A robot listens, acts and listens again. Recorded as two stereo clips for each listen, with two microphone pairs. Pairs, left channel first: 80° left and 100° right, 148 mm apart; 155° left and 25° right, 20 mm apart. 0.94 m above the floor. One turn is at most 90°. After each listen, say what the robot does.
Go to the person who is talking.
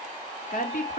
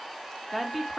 Turn 65° left.
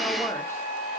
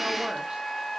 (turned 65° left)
Keep listening.
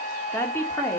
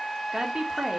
Turn 10° left.
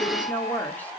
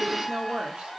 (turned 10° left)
Drive 1.0 m forward.
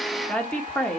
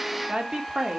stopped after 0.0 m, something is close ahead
Something is in my way. I am facing the woman speaking but have not reached it.